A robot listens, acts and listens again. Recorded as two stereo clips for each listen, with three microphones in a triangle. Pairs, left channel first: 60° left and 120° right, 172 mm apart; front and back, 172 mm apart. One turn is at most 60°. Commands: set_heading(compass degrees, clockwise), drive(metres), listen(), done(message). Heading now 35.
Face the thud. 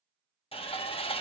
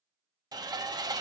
listen()
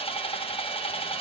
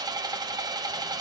listen()
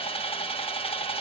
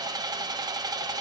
done("I can't make out a thud to turn to.")